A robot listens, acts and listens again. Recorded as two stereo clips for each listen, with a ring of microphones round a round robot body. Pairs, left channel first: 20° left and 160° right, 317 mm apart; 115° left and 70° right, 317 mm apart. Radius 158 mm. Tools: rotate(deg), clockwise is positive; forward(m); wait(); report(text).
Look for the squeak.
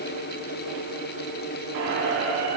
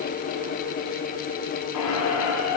rotate(-150)
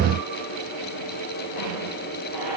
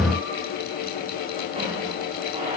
report("Facing the squeak.")